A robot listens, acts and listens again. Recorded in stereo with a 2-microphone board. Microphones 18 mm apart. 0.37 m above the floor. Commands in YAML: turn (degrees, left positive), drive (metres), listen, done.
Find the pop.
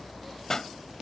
turn: 30
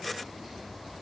listen: true
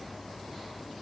done: "I heard a pop, but can't make it out now. It was about straight ahead or 120° left."